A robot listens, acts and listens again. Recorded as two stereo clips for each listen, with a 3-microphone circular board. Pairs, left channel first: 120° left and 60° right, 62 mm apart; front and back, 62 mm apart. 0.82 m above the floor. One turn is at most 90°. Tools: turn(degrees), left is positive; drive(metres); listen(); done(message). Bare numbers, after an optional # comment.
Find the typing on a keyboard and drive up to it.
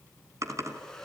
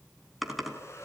# The typing on a keyboard: 90° right.
turn(-90)
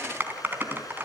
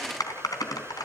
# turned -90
drive(1.0)
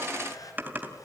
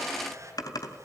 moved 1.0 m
drive(1.0)
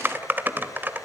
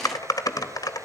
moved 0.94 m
drive(1.0)
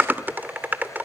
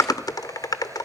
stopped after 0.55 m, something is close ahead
done("Arrived at the typing on a keyboard, straight ahead.")